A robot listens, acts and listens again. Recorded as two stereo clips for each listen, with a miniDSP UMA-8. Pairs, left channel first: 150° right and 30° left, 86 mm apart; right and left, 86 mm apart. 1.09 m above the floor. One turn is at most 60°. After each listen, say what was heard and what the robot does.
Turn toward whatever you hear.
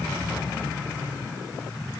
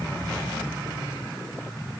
Keep listening.
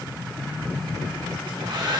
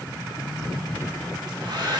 The hair dryer: 55° left. Turn 55° left.
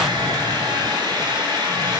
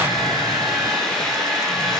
Facing the hair dryer, 2 to 4 m away.